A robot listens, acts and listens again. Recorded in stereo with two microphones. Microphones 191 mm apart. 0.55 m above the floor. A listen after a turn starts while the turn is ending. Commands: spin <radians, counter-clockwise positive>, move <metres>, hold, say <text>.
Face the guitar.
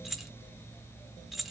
hold
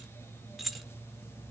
hold
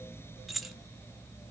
say I can't make out a guitar, only keys jangling.